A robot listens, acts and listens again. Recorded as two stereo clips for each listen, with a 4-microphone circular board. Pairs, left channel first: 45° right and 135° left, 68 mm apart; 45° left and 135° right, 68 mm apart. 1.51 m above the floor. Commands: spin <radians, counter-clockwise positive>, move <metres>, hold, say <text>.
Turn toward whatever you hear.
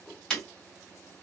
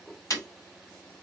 spin 0.61
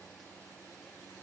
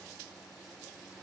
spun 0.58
say I heard breaking glass from this way, but can't make it out now.